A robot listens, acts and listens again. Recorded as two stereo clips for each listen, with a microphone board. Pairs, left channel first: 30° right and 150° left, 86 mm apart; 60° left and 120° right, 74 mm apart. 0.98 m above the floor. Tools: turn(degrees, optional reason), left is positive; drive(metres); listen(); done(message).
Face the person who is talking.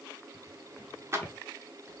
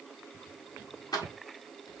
listen()
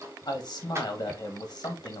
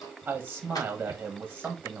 turn(degrees=-55, reason="The man speaking: 55° right.")
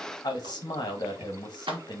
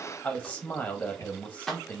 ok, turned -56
done("Found it: a man speaking, straight ahead, 1 to 2 m away.")